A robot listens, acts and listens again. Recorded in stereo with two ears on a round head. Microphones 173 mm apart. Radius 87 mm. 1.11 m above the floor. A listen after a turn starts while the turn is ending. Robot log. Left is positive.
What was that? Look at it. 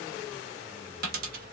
note: The dropped coin: about 50° right or 130° right.
cmd yaw -50
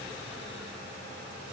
cmd idle
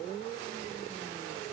end: I heard a dropped coin, but can't make it out now. It was about straight ahead or 80° right.